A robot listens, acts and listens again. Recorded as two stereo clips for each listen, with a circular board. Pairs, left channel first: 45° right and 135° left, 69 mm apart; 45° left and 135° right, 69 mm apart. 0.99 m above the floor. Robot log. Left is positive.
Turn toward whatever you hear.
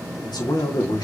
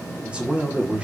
note: The man speaking: 60° right.
cmd yaw -60
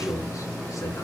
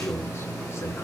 end: Facing the man speaking.